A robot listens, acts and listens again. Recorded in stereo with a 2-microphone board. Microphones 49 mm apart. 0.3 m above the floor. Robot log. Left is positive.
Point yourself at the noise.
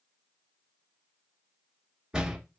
cmd yaw -30
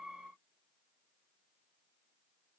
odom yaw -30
cmd idle
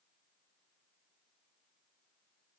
end: I heard a door slam, but can't make it out now. It was about 15° left or 135° right.